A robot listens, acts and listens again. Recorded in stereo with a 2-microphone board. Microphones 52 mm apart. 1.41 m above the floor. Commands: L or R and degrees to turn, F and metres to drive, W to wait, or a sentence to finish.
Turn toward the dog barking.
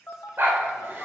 R50
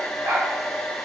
R50
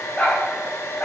L25
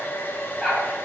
Found it: a dog barking, straight ahead, 2 to 4 m away.